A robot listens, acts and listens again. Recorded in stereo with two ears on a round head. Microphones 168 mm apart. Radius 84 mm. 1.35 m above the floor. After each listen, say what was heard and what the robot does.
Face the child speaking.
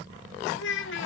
The child speaking: about 70° left or 110° left. Turn 70° left.
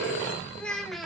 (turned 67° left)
Found it: a child speaking, straight ahead.